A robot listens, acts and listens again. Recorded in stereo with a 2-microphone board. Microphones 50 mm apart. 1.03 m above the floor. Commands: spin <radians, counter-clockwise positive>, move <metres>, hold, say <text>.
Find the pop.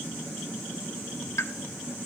spin 1.22
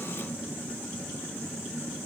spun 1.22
hold
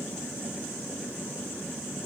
say I heard a pop, but can't make it out now. It was about straight ahead or 40° left.